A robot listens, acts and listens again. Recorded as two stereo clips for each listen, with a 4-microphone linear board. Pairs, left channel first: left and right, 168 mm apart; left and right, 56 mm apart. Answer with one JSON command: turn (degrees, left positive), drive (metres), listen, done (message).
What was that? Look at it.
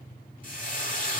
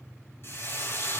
{"turn": 50}
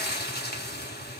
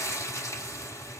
{"turn": 80}
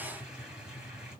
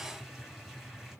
{"listen": true}
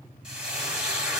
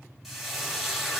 {"done": "Facing the frying."}